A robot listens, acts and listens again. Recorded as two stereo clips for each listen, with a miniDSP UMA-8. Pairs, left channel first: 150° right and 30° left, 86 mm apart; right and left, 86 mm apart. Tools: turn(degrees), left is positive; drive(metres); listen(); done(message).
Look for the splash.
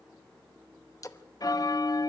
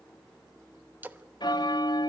turn(degrees=160)
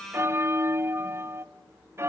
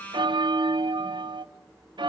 done("Facing where the splash came from. I can't hear it now.")